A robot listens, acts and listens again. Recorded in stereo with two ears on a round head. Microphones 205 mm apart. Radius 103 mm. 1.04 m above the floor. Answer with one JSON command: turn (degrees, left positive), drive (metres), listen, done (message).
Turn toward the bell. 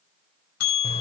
{"turn": 70}
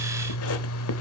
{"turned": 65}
{"listen": true}
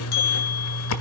{"turn": 45}
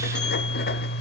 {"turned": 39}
{"listen": true}
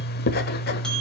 {"listen": true}
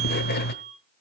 {"done": "Facing the bell."}